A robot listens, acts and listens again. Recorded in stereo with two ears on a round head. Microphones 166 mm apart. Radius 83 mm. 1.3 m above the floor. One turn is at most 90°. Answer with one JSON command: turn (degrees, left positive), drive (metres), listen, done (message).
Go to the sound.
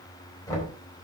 {"turn": 20}
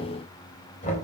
{"turn": 90}
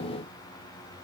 {"turn": 50}
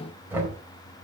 {"turn": -10}
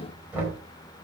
{"turn": -10}
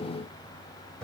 {"drive": 1.0}
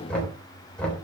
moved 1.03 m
{"drive": 1.0}
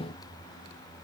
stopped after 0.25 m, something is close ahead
{"listen": true}
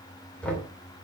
{"done": "Blocked. The knocking is further on, straight ahead."}